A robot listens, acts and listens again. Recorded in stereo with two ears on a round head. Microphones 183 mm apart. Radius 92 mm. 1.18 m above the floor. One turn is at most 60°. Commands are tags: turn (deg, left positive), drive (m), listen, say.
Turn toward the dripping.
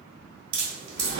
<turn deg="-50"/>
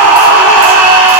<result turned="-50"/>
<listen/>
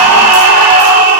<listen/>
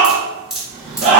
<say>Found it: dripping, straight ahead.</say>